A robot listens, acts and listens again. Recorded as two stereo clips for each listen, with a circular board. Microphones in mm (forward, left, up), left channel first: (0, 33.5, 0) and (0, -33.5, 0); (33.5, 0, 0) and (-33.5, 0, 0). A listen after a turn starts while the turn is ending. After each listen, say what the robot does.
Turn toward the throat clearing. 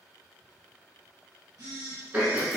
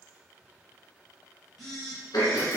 Turn 25° right.
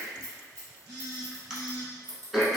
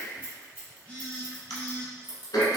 Turn 10° right.
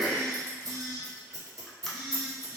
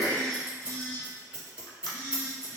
Found it: throat clearing, straight ahead, under 1 m away.